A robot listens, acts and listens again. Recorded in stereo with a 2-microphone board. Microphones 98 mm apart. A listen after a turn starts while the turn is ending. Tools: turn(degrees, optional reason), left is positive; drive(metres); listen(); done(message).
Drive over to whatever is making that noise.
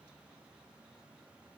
listen()
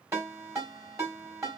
turn(degrees=-35, reason="The ringtone: about 35° right or 145° right.")
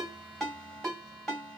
drive(metres=1.0)
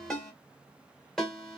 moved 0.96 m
drive(metres=1.0)
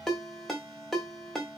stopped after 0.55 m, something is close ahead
done("Arrived at the ringtone, straight ahead.")